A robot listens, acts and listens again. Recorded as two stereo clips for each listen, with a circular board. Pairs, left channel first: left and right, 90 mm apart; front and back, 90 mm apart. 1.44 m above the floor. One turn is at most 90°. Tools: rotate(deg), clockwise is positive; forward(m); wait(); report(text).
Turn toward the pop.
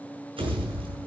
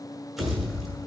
rotate(90)
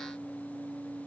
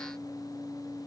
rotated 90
report("Facing where the pop came from. I can't hear it now.")